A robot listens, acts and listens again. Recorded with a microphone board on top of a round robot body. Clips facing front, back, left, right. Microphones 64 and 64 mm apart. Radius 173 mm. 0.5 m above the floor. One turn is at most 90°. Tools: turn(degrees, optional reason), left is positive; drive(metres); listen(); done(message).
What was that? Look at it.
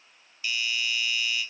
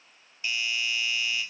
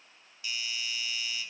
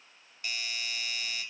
turn(degrees=-90, reason="The doorbell: 120° right.")
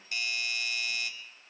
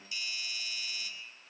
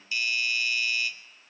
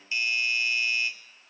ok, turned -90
turn(degrees=-30, reason="The doorbell is now 30° right.")
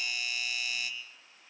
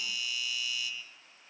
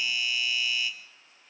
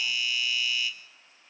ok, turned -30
done("Facing the doorbell.")